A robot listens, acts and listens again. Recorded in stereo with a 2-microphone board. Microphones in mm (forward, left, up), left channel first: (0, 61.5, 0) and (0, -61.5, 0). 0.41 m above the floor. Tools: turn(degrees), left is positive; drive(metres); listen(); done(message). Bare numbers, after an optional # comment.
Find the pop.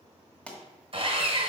turn(30)
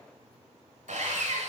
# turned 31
listen()
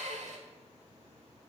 done("I heard a pop, but can't make it out now. It was about 20° right or 140° left.")